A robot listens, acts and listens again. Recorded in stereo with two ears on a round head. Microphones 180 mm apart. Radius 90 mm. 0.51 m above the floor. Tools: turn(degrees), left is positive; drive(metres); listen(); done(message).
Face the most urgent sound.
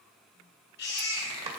turn(degrees=65)
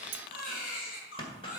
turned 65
turn(degrees=50)
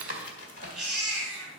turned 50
done("Facing the baby crying, 2 to 4 m away.")